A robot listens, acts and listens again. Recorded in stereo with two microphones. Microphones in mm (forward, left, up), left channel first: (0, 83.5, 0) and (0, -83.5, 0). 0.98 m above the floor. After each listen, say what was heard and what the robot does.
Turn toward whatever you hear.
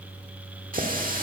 The running tap: about 55° right or 125° right. Turn 55° right.
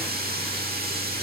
So it is at 70° right. Turn 70° right.
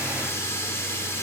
The running tap is now 15° left. Turn 15° left.
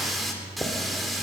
Facing the running tap.